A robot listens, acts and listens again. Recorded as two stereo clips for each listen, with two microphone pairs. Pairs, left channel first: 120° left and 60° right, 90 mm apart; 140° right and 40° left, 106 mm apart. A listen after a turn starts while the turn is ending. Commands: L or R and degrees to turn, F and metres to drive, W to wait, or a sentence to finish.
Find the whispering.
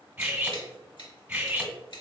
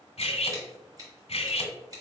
W
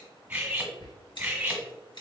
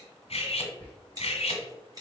L150
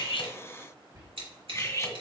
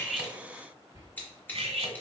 R15
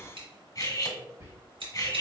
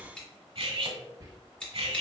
R10
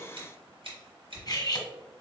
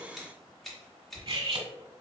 Found it: whispering, straight ahead, 1 to 2 m away.